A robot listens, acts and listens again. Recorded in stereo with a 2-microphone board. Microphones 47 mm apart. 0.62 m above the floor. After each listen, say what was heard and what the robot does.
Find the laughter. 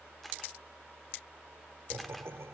The laughter: about 70° right or 110° right. Turn 70° right.
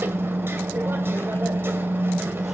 Keep listening.
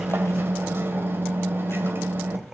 So it is at 10° right. Turn 10° right.
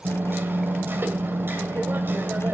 Keep listening.
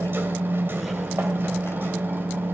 Keep listening.
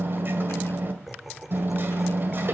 Found it: laughter, straight ahead, 1 to 2 m away.